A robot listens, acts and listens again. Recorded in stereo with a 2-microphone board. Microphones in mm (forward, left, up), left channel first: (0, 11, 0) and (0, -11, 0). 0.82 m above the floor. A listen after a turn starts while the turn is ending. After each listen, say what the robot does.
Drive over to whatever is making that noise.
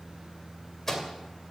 Turn 20° left.
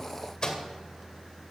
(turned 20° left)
Turn 140° left.
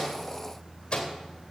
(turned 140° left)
Turn 45° left.
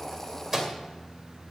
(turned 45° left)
Turn 20° right.
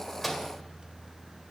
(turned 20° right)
Keep listening.
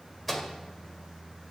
Drive 1.0 m forward.
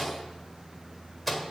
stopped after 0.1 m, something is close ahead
Something is in my way. I am facing the microwave but have not reached it.